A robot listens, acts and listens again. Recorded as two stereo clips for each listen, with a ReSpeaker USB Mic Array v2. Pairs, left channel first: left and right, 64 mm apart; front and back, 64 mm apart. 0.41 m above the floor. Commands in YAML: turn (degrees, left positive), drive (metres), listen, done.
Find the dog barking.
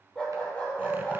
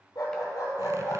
turn: 20
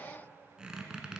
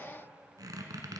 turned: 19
listen: true
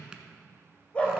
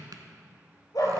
turn: 20
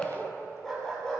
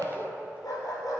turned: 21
turn: 10
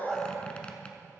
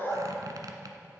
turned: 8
done: "Found it: a dog barking, straight ahead."